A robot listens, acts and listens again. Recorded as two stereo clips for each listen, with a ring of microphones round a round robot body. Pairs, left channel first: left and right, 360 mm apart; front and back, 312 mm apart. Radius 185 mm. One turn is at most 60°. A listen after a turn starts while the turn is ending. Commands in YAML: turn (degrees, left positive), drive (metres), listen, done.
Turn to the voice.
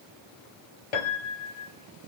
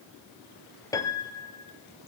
listen: true
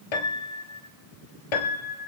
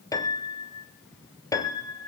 listen: true
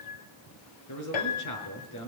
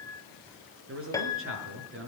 turn: 60
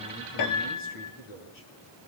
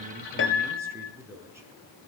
turn: 60
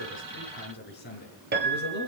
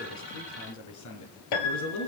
turn: 25
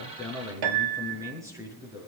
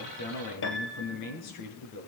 turn: -10
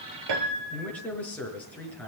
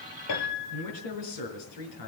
done: "Found it: a man speaking, straight ahead, over 4 m away."